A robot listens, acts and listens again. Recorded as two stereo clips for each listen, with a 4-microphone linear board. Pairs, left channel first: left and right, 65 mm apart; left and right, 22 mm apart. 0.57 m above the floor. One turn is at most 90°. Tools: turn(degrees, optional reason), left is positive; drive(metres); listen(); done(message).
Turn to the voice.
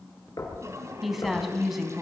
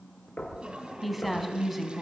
turn(degrees=-30)
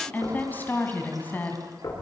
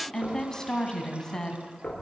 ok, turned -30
turn(degrees=30, reason="So it is at 30° left.")
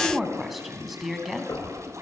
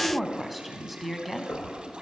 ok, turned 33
done("Facing the woman speaking.")